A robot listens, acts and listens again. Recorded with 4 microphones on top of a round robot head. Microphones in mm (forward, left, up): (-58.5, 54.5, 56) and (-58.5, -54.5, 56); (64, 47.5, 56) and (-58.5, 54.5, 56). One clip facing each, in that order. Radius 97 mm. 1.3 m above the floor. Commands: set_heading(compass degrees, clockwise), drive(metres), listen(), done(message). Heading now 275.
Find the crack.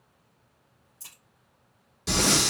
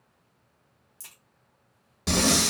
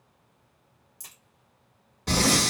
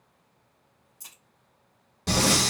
set_heading(340)
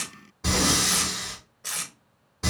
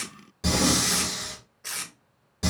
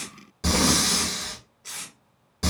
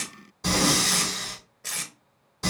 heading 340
done("I heard a crack from this way, but can't make it out now.")